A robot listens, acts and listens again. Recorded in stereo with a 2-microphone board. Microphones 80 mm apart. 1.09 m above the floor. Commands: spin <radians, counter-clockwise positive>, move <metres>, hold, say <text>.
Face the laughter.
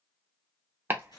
hold
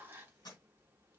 hold
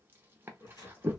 spin 0.87
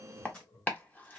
spin 1.40
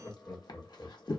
spin 0.52
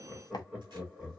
spin -0.26
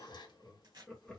say Found it: laughter, straight ahead, 1 to 2 m away.